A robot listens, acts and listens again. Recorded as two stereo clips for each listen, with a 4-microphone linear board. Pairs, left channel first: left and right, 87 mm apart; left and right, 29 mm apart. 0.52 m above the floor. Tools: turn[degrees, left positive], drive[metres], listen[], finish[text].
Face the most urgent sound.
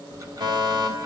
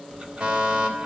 Thought: The fire alarm: about 55° right or 125° right.
Action: turn[-55]
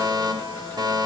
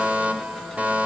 Thought: So it is at 55° right.
Action: turn[-55]
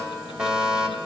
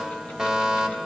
Action: finish[Facing the fire alarm.]